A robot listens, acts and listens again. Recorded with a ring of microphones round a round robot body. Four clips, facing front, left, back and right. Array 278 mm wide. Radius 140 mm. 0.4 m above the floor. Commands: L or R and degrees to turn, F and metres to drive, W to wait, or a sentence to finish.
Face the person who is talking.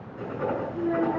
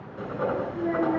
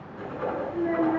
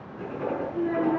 R160
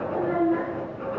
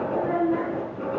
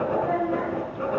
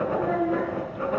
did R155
R30
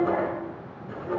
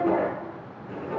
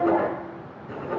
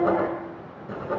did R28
R10
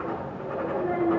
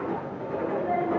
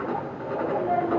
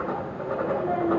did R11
R15
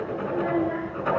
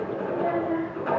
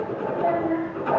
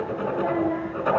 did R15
Facing the child speaking, 2 to 4 m away.